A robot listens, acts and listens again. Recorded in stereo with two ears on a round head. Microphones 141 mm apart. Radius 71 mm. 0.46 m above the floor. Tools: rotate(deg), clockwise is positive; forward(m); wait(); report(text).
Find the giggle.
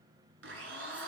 wait()
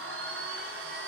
wait()
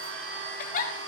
rotate(-55)
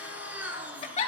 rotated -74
rotate(-40)
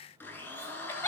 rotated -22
rotate(-15)
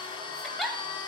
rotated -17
report("Found it: a giggle, straight ahead.")